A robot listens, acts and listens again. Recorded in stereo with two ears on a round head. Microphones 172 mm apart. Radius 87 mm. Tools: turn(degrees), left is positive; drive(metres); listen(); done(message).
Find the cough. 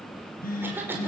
turn(degrees=-30)
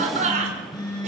turn(degrees=-140)
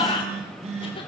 turn(degrees=30)
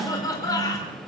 turn(degrees=20)
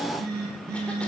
listen()
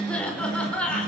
done("Found it: a cough, straight ahead, over 4 m away.")